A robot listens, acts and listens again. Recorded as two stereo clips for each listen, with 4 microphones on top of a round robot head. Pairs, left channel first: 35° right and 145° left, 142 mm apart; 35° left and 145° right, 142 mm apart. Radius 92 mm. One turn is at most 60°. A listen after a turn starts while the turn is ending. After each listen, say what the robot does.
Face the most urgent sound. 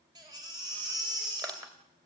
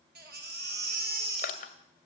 Turn 60° right.
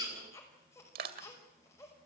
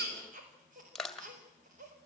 Turn 60° right.
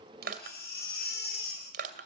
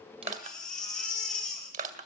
Turn 50° right.
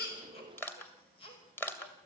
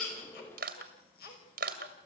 Turn 20° left.
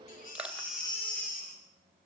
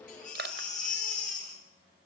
Facing the baby crying, over 4 m away.